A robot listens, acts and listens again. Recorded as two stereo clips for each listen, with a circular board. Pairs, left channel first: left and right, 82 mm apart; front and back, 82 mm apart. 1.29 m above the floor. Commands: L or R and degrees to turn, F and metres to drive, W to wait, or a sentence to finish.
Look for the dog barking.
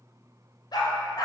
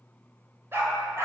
L125
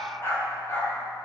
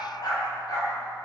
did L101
L35
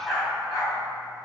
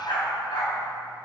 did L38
Facing the dog barking, over 4 m away.